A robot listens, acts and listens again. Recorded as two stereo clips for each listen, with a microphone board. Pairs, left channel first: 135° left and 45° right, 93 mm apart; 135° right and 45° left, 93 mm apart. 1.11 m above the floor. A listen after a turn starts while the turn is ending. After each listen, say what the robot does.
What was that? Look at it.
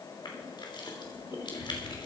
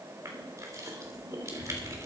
Turn 100° left.
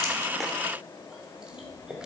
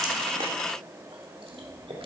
Turn 35° left.
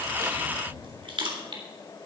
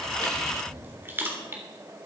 Turn 20° right.
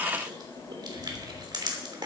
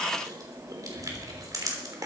Found it: crushing, straight ahead.